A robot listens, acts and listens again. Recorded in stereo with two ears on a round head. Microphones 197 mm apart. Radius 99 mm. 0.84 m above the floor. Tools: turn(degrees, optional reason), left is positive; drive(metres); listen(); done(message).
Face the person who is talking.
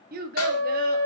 turn(degrees=-40, reason="The child speaking: about 40° right or 140° right.")
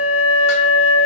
listen()
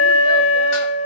listen()
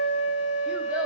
done("I heard a child speaking, but can't make it out now. It was about straight ahead or 100° right.")